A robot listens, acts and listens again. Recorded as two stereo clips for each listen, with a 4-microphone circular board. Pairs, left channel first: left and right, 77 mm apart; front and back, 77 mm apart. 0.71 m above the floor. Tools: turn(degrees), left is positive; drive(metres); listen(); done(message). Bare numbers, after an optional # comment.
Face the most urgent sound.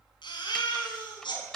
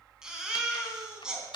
# The baby crying: 100° left.
turn(100)
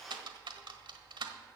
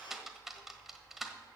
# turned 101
listen()
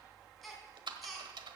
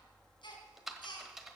done("Facing the baby crying, 2 to 4 m away.")